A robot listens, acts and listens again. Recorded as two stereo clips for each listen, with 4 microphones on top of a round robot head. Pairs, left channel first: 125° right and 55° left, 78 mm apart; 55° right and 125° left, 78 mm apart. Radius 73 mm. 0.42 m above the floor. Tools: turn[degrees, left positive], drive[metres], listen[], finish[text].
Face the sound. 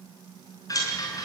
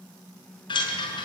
Thought: The chime: 80° right.
Action: turn[-80]
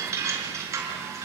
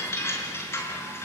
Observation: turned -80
Action: finish[Found it: a chime, straight ahead, over 4 m away.]